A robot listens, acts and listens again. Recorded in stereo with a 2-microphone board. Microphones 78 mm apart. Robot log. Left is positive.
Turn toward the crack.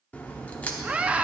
note: The crack: about 20° left or 160° left.
cmd yaw +20
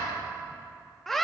cmd idle
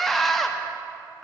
end: I heard a crack, but can't make it out now. It was about straight ahead or 140° left.